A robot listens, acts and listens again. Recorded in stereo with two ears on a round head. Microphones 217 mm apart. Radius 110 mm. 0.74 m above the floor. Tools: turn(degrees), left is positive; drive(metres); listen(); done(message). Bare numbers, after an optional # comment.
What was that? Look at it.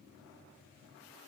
listen()
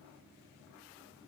listen()
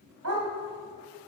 # The dog barking: about 65° right or 115° right.
turn(-65)
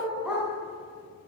done("Facing the dog barking, 2 to 4 m away.")